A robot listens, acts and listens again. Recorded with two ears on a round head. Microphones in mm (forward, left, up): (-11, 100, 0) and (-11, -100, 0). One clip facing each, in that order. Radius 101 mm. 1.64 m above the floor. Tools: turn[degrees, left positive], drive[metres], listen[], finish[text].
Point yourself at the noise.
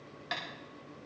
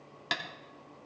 Thought: The tapping: about 70° right or 110° right.
Action: turn[-70]
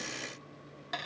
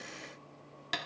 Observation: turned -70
Thought: So it is at 40° right.
Action: turn[-40]
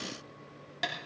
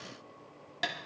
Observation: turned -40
Action: finish[Facing the tapping.]